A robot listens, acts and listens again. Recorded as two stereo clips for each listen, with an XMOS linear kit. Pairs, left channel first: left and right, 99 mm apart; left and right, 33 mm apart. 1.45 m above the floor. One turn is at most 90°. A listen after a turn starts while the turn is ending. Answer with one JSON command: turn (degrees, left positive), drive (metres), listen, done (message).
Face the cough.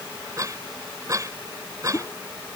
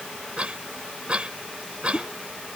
{"turn": -35}
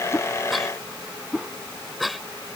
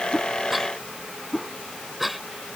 {"done": "Facing the cough."}